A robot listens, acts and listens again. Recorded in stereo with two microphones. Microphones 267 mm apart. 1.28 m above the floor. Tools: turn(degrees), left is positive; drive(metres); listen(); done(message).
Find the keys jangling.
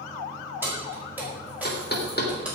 turn(degrees=-30)
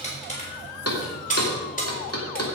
turn(degrees=30)
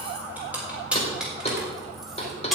done("Found it: keys jangling, straight ahead, 2 to 4 m away.")